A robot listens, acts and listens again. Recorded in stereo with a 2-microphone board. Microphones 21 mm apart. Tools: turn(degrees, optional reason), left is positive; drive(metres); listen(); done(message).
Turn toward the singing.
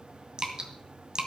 listen()
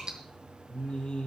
turn(degrees=70, reason="The singing: about 70° left or 110° left.")
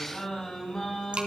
turn(degrees=30, reason="So it is at 30° left.")
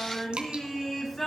turn(degrees=10, reason="The singing is now 10° left.")
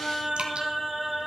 done("Facing the singing.")